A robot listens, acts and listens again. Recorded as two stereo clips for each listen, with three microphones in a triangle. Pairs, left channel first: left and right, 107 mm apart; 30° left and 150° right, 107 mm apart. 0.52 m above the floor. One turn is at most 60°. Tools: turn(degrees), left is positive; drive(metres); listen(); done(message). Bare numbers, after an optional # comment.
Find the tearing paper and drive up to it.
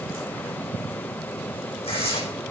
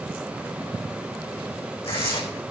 # The tearing paper: 60° left.
turn(60)
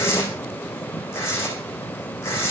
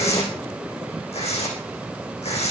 # The tearing paper is now 25° left.
turn(25)
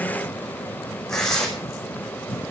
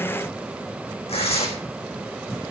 drive(1.0)
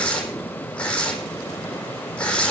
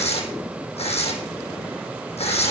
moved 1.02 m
# The tearing paper is now 10° left.
turn(10)
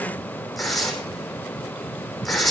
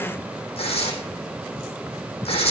drive(1.0)
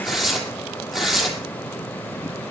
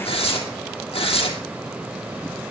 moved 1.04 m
drive(1.0)
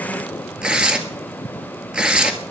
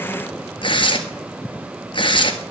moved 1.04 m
# The tearing paper is now 10° right.
turn(-10)
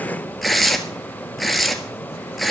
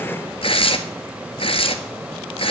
drive(1.0)
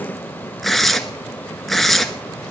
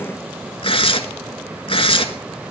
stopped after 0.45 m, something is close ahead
done("I am next to the tearing paper.")